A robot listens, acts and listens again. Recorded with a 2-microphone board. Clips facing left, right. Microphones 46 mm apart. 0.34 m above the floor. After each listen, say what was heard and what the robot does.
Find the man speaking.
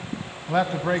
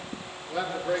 The man speaking: about 65° left or 115° left. Turn 65° left.
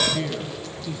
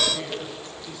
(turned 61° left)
So it is at 25° left. Turn 25° left.
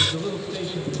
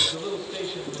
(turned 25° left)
Facing the man speaking.